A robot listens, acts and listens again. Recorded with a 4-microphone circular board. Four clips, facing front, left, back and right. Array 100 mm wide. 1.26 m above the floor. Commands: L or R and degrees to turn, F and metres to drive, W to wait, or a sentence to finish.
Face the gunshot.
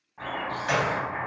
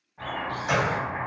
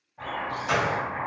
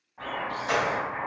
L10
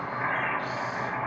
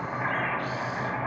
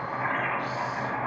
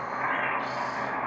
I heard a gunshot from this way, but can't make it out now.